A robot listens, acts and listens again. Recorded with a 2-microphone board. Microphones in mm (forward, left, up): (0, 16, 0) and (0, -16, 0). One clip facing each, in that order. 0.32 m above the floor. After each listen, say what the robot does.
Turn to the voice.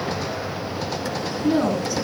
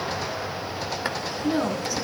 Turn 30° right.
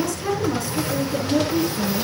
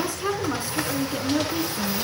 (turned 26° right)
Turn 150° right.
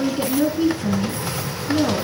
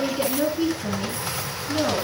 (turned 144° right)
Facing the woman speaking.